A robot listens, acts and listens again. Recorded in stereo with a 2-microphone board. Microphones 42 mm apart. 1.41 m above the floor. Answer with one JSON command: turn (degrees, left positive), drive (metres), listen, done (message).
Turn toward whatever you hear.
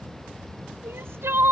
{"turn": -90}
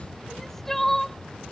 {"done": "Facing the crying."}